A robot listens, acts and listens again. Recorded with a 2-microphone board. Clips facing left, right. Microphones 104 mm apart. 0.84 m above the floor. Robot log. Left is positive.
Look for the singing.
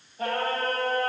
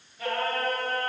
note: The singing: about 35° left or 145° left.
cmd yaw +35
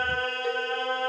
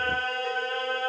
note: So it is at 10° right.
cmd yaw -10
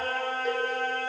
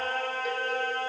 end: Facing the singing.